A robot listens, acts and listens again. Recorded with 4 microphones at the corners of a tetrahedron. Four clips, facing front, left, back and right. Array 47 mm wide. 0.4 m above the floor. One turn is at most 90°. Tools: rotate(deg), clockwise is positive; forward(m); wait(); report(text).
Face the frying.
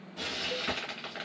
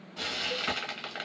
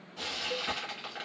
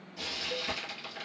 rotate(-90)
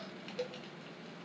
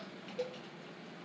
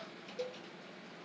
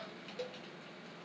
wait()
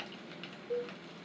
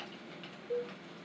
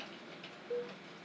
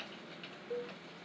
wait()
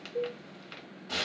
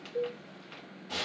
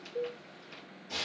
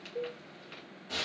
rotate(-10)
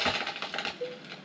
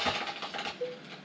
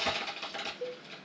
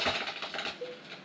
report("Found it: frying, straight ahead.")